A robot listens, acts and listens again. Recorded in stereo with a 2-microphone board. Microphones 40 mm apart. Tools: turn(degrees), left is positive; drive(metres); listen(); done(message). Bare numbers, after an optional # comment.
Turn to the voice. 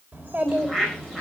# The child speaking: about 40° right or 140° right.
turn(-40)
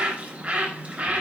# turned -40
listen()
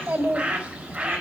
# So it is at 100° right.
turn(-100)
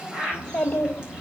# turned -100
# The child speaking is now 25° left.
turn(25)
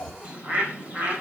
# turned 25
# The child speaking is now 15° left.
turn(15)
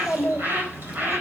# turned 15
done("Facing the child speaking, 2 to 4 m away.")